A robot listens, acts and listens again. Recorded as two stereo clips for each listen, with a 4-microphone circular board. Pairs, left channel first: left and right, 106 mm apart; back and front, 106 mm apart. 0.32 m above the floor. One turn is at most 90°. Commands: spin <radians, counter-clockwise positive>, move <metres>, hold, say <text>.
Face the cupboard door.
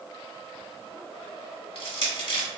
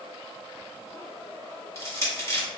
hold
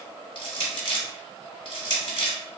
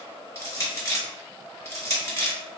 hold
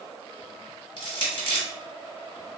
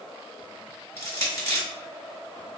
say I can't make out a cupboard door, only crushing.